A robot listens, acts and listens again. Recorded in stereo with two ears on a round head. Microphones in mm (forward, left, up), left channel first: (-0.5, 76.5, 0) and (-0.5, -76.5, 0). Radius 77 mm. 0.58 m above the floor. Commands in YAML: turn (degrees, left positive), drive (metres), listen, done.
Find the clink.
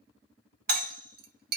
turn: -60
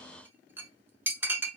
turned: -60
turn: -15
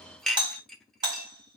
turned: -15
done: "Facing the clink, under 1 m away."